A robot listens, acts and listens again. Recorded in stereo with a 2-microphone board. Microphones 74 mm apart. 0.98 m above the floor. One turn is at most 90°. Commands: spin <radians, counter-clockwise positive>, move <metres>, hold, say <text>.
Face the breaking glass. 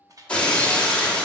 spin 0.26
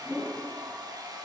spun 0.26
hold
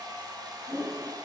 say I heard breaking glass, but can't make it out now. It was about straight ahead or 150° left.